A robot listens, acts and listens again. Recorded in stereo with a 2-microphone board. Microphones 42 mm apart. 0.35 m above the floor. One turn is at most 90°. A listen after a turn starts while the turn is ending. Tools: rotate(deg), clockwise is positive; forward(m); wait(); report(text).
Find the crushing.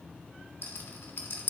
wait()
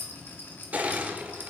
rotate(40)
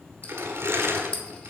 rotate(90)
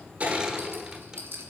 rotate(15)
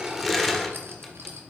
report("Facing the crushing.")